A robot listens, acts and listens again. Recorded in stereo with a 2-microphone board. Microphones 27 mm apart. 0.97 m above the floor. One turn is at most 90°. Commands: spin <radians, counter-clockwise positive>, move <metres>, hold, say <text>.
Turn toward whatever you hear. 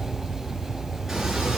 spin -0.35
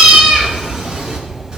spin -0.61
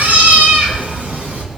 spin -1.57
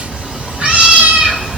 spin -0.87
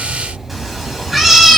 say Found it: a cat meowing, straight ahead, 2 to 4 m away.